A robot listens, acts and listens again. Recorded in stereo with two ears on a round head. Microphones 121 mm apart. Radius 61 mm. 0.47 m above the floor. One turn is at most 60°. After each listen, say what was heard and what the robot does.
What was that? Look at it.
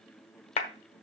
The clap: about 50° left or 130° left. Turn 50° left.
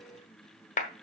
So it is at 70° left. Turn 60° left.
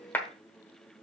The clap is now 15° left. Turn 15° left.
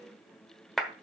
Facing the clap, 1 to 2 m away.